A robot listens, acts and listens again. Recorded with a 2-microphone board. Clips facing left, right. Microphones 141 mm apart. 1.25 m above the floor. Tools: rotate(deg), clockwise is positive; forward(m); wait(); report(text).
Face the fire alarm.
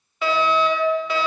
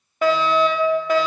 rotate(50)
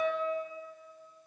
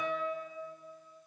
rotate(10)
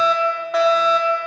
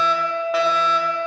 report("Facing the fire alarm, 1 to 2 m away.")